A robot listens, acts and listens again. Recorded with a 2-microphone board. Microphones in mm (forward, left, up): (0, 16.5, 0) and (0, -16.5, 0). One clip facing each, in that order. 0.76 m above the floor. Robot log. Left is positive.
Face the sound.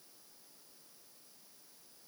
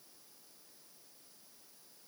cmd idle
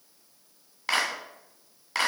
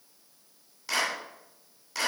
note: The clap: about 55° left or 125° left.
cmd yaw +55
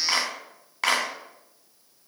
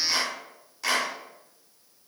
note: So it is at 65° left.
cmd yaw +65
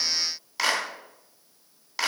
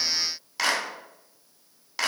end: Facing the clap, 2 to 4 m away.